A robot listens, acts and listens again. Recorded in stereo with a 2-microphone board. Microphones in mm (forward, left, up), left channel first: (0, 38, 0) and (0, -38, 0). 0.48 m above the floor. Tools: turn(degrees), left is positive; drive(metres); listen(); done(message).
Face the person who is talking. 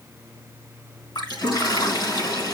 listen()
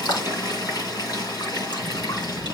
turn(degrees=25)
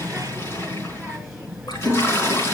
done("Facing the child speaking, over 4 m away.")